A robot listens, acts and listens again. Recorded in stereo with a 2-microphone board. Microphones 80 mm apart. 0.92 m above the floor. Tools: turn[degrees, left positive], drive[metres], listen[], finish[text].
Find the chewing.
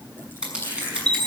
Thought: The chewing: about 30° left or 150° left.
Action: turn[30]
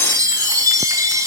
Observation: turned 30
Action: listen[]
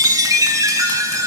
Action: listen[]
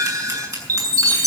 Action: finish[I heard chewing, but can't make it out now. It was about straight ahead or 120° left.]